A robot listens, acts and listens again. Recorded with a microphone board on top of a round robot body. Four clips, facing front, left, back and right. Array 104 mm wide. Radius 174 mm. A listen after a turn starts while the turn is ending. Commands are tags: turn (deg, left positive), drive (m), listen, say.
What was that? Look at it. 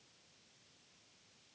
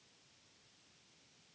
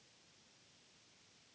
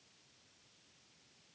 <listen/>
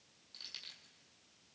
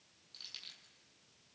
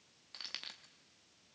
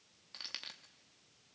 <turn deg="-135"/>
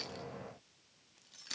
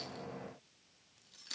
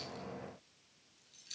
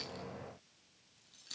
<turn deg="20"/>
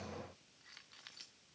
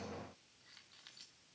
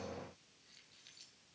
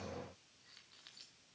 <listen/>
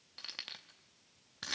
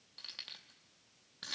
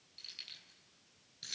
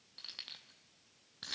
<say>Facing the keys jangling.</say>